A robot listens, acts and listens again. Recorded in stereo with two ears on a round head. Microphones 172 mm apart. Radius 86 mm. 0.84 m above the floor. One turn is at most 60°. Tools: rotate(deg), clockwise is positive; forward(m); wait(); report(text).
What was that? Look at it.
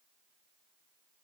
wait()
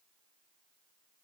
wait()
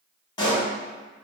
rotate(-25)
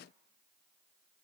wait()
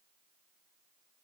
report("I heard a pop, but can't make it out now. It was about straight ahead or 130° left.")